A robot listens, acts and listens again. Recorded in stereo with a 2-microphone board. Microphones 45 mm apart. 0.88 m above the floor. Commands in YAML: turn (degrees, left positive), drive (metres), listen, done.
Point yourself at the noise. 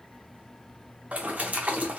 turn: -35
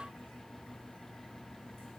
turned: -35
listen: true
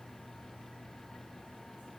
done: "I heard a splash, but can't make it out now. It was about straight ahead or 110° right."